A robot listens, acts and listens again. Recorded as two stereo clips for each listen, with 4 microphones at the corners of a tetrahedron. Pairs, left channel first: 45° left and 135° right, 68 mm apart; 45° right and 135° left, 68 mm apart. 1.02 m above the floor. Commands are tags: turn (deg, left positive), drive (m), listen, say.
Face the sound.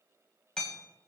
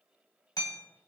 <turn deg="-35"/>
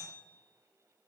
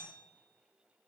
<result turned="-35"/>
<listen/>
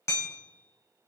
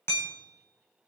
<say>Found it: hammering, straight ahead, 2 to 4 m away.</say>